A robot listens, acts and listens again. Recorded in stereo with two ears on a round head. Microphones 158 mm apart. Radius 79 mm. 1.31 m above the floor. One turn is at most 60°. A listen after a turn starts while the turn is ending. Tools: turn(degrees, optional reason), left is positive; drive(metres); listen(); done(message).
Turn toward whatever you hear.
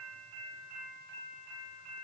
listen()
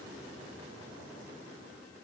listen()
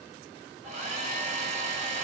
turn(degrees=-40, reason="The hair dryer: about 40° right or 140° right.")
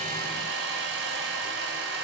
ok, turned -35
turn(degrees=-60, reason="So it is at 105° right.")
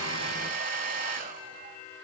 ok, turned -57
turn(degrees=-50, reason="The hair dryer is now 50° right.")
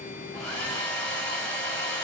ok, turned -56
turn(degrees=10, reason="The hair dryer is now 10° left.")
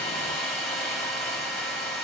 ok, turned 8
done("Facing the hair dryer, over 4 m away.")